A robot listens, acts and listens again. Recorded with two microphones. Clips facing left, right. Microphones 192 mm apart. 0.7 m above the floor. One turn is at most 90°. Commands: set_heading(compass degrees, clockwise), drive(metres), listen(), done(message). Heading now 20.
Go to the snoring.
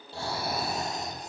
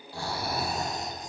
set_heading(355)
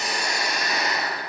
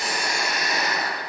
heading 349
drive(1.0)
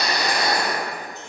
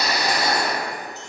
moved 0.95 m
drive(1.0)
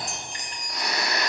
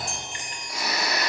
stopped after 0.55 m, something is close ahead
done("I am next to the snoring.")